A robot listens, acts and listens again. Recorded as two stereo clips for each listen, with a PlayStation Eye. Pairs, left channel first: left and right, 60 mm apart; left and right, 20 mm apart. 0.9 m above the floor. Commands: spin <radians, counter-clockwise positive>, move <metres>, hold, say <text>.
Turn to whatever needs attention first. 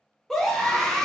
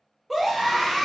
spin 0.52
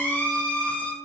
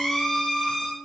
spin 2.53
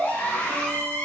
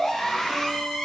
spin 0.44
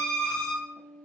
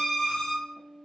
spin 0.26
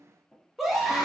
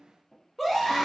say Found it: a scream, straight ahead, under 1 m away.